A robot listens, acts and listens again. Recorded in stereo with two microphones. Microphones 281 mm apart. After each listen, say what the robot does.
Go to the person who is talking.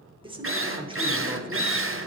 Turn 20° right.
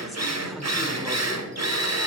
Keep listening.
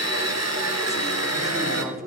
Drive 1.0 m forward.
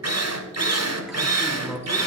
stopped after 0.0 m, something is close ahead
Blocked. The man speaking is further on, straight ahead.